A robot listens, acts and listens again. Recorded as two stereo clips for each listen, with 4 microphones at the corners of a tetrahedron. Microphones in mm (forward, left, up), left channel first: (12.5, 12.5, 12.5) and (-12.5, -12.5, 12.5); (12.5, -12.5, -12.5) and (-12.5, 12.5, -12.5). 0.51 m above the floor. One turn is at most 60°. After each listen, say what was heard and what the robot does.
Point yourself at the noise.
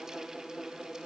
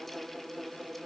Keep listening.
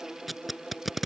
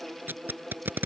The tape being pulled: 140° left. Turn 60° left.
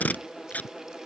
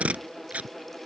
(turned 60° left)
The tape being pulled is now 90° left. Turn 60° left.
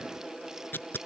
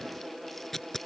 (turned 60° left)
The tape being pulled is now 35° left. Turn 35° left.
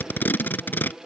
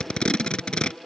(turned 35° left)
The tape being pulled is now 15° left. Turn 15° left.
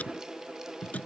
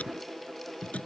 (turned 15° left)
Facing the tape being pulled.